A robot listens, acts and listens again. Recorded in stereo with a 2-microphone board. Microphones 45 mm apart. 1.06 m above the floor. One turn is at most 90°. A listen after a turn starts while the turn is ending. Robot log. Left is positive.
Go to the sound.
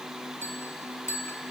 cmd yaw +90
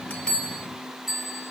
cmd fwd 1.0
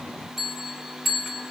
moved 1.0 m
cmd fwd 1.0
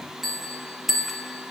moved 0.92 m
cmd fwd 1.0
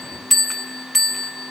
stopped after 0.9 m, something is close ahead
end: Arrived at the bell, straight ahead.